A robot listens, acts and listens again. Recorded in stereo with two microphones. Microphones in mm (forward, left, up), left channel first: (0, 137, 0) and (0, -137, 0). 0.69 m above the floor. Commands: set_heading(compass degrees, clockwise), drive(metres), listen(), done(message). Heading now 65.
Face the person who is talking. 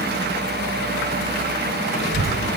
set_heading(155)
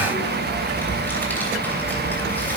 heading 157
done("Facing the child speaking.")